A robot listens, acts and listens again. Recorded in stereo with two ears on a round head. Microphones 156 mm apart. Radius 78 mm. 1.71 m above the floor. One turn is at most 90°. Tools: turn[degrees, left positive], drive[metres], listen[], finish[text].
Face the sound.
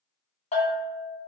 Thought: The bell: about 35° left or 145° left.
Action: turn[35]
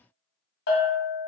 Thought: So it is at 105° left.
Action: turn[90]
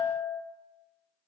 Thought: The bell is now 35° left.
Action: turn[35]
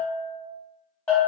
Thought: The bell is now 10° left.
Action: turn[10]
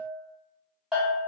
Action: finish[Facing the bell, 1 to 2 m away.]